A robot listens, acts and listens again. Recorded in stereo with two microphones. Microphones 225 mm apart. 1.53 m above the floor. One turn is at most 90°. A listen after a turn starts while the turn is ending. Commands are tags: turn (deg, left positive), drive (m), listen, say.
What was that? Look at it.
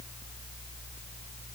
<listen/>
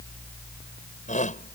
<turn deg="35"/>
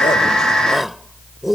<say>Found it: a shout, straight ahead.</say>